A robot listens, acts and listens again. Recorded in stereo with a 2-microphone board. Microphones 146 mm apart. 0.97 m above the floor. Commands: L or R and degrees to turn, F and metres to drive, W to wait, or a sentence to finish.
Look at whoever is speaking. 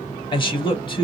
L30
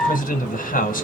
L120
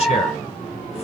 W
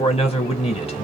L40
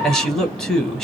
Found it: a man speaking, straight ahead, 1 to 2 m away.